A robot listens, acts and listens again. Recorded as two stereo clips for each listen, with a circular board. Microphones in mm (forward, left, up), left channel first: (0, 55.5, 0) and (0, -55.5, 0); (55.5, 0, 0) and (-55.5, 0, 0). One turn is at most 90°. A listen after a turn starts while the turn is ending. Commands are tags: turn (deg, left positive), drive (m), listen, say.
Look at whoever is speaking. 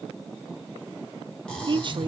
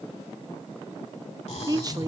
<turn deg="-90"/>
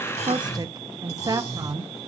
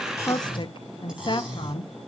<turn deg="-40"/>
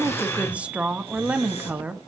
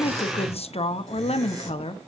<turn deg="-15"/>
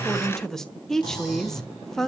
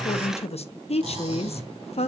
<say>Found it: a woman speaking, straight ahead, under 1 m away.</say>